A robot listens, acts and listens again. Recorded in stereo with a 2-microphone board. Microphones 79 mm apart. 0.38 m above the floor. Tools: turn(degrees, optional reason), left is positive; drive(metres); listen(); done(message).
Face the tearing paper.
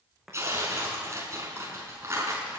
turn(degrees=-35, reason="The tearing paper: about 35° right or 145° right.")
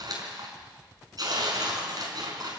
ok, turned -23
turn(degrees=-125, reason="So it is at 125° right.")
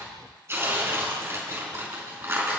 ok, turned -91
turn(degrees=-30, reason="The tearing paper is now 30° right.")
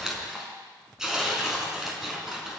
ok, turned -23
turn(degrees=-10, reason="The tearing paper is now 10° right.")
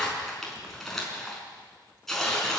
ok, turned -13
done("Facing the tearing paper, over 4 m away.")